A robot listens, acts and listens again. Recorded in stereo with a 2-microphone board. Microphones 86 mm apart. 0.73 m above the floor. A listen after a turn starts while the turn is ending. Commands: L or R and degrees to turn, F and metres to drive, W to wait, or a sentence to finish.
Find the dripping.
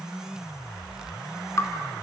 L40
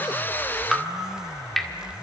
Facing the dripping.